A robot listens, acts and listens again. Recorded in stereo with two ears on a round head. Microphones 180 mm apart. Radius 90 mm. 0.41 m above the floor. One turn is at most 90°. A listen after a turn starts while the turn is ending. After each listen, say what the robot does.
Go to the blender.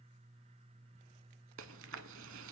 Keep listening.
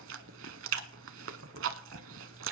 Keep listening.
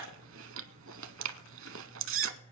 I can't make out a blender to turn to.